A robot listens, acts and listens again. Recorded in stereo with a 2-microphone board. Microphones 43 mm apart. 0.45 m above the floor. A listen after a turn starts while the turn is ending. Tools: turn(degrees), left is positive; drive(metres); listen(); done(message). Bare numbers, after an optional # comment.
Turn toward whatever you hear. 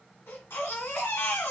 # The baby crying: about 70° left or 110° left.
turn(70)
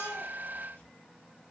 listen()
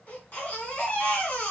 # So it is at 35° left.
turn(35)
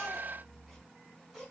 done("Found it: a baby crying, straight ahead, 2 to 4 m away.")